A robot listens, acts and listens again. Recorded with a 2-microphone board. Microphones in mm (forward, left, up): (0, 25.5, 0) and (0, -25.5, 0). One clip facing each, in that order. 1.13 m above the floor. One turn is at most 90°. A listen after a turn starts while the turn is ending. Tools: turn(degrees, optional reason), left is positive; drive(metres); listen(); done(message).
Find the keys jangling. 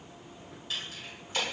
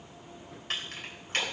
turn(degrees=-55, reason="The keys jangling: about 55° right or 125° right.")
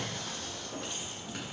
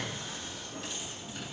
listen()
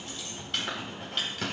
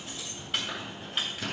turn(degrees=-10, reason="So it is at 10° right.")
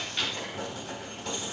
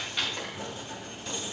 done("Found it: keys jangling, straight ahead.")